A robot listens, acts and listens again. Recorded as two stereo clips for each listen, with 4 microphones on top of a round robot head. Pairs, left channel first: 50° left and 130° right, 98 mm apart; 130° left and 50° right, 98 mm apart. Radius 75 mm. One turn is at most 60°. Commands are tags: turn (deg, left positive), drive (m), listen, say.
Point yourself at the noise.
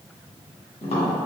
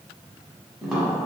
<turn deg="40"/>
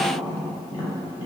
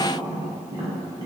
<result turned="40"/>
<turn deg="10"/>
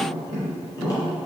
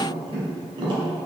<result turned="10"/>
<say>Facing the tapping, 1 to 2 m away.</say>